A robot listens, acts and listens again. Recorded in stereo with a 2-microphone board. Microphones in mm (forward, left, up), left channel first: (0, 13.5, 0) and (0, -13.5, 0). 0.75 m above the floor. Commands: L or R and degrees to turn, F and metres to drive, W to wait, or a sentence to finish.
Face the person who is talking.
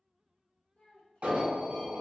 L40
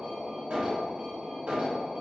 W
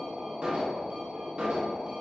W
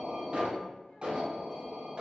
I heard a child speaking, but can't make it out now. It was about straight ahead or 100° left.